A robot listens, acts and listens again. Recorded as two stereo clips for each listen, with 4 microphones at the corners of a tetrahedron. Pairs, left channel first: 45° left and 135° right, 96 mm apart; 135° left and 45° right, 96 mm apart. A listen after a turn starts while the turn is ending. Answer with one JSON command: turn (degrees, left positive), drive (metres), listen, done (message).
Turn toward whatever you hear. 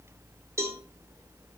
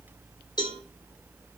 {"turn": 165}
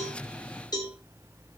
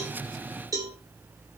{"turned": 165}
{"done": "Found it: a cowbell, straight ahead."}